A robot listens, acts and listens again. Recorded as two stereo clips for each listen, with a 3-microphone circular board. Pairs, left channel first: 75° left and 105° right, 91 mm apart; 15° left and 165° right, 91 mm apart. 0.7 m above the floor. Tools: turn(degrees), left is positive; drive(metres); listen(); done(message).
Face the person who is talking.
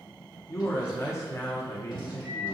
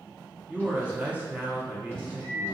turn(degrees=125)
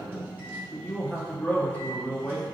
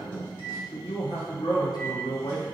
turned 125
done("Facing the man speaking.")